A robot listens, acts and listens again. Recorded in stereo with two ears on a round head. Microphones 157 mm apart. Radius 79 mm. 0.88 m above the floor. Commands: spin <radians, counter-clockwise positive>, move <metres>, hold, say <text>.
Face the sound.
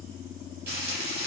spin -0.96
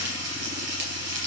spin -1.13
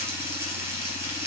spin -0.26
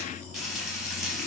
say Facing the frying, 2 to 4 m away.